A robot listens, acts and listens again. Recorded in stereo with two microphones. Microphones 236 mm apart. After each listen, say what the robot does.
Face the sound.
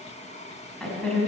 Turn 30° left.
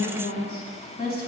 Turn 140° left.
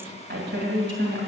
Turn 50° right.
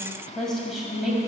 Found it: a woman speaking, straight ahead.